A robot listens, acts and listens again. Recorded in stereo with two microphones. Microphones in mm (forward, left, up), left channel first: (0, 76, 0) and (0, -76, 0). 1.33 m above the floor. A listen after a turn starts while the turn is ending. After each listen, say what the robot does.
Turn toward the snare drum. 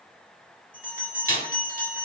Turn 70° right.
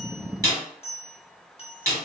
Turn 20° right.
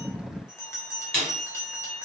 Facing the snare drum, 1 to 2 m away.